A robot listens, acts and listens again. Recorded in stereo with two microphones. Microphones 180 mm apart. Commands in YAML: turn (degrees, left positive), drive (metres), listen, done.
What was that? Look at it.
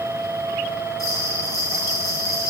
turn: -70
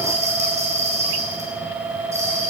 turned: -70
turn: -40
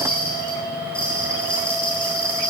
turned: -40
done: "Facing the bell."